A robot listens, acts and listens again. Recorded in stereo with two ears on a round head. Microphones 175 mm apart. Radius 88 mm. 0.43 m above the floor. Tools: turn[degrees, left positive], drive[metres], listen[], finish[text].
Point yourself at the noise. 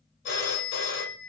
Thought: The phone ringing: about 65° left or 115° left.
Action: turn[65]
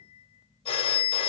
Thought: So it is at 35° left.
Action: turn[35]
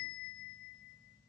Thought: The phone ringing is now 10° left.
Action: turn[10]
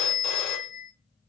Action: finish[Facing the phone ringing.]